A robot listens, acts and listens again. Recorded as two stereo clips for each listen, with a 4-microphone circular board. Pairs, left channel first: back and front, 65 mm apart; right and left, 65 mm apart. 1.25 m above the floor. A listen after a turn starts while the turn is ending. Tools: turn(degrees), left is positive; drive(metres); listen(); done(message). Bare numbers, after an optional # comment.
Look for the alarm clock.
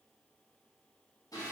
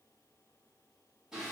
listen()
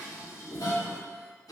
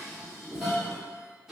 listen()
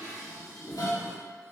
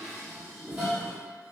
done("I can't make out an alarm clock, only dishes clattering.")